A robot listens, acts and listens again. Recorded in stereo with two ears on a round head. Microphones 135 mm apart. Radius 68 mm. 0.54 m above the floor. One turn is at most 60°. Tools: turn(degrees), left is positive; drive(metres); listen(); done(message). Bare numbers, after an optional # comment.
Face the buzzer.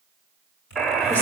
turn(30)
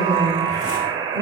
# So it is at 30° right.
turn(-30)
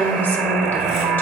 done("Facing the buzzer.")